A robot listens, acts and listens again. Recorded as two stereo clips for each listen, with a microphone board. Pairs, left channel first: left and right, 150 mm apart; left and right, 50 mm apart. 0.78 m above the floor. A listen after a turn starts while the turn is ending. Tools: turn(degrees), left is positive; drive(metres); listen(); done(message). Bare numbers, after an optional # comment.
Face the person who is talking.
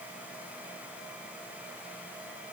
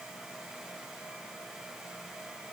listen()
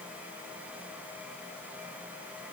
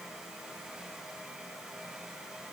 listen()
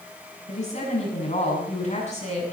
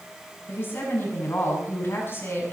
# The woman speaking: about 45° left or 135° left.
turn(45)
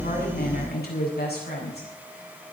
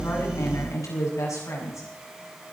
# So it is at 90° left.
turn(90)
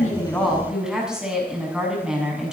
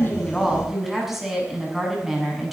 done("Found it: a woman speaking, straight ahead, over 4 m away.")